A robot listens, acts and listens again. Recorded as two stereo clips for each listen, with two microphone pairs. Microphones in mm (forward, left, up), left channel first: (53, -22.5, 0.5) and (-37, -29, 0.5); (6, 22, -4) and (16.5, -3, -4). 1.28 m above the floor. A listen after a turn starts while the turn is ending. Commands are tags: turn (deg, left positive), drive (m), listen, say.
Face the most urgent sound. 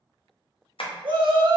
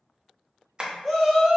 <turn deg="-145"/>
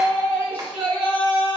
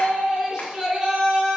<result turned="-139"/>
<say>Found it: a shout, straight ahead.</say>